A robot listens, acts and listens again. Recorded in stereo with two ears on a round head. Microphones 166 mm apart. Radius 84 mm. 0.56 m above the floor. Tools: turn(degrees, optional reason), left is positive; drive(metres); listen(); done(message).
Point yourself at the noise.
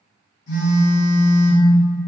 turn(degrees=65, reason="The phone buzzing: about 65° left or 115° left.")
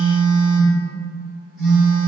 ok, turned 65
done("Facing the phone buzzing, 1 to 2 m away.")